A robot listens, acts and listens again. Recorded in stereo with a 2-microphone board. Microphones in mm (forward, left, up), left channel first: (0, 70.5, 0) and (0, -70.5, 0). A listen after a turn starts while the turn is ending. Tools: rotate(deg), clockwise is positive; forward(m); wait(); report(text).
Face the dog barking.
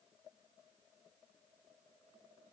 wait()
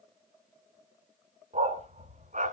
rotate(65)
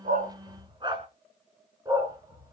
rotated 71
rotate(25)
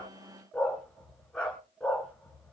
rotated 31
report("Found it: a dog barking, straight ahead, 2 to 4 m away.")